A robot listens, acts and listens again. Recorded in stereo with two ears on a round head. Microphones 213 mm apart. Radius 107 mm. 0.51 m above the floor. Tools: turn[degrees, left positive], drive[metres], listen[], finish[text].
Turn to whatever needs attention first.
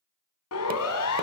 Thought: The siren: about 65° left or 115° left.
Action: turn[65]
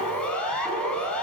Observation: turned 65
Action: finish[Found it: a siren, straight ahead.]